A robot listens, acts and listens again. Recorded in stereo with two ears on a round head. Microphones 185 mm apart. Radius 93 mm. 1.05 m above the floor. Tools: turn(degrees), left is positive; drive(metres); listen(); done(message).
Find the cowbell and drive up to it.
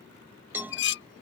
turn(degrees=-30)
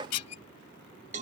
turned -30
turn(degrees=-140)
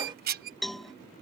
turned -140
drive(metres=1.0)
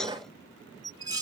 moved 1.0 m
drive(metres=1.0)
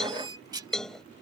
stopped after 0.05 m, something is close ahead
done("Blocked. The cowbell is further on, straight ahead.")